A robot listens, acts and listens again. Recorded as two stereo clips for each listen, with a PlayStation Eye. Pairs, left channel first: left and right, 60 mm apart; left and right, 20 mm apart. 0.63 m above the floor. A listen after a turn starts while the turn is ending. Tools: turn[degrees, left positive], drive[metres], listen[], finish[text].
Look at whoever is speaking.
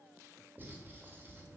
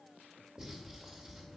Action: listen[]
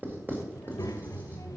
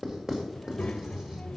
Thought: The child speaking: about 70° left or 110° left.
Action: turn[70]
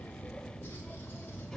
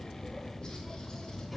Action: finish[Found it: a child speaking, straight ahead, 1 to 2 m away.]